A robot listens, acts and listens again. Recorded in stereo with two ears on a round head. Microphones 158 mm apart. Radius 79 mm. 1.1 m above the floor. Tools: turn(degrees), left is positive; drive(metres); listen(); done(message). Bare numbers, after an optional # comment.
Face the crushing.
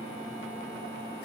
listen()
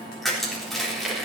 turn(30)
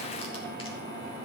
listen()
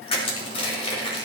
# So it is at 145° left.
turn(145)
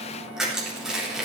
done("Facing the crushing, 2 to 4 m away.")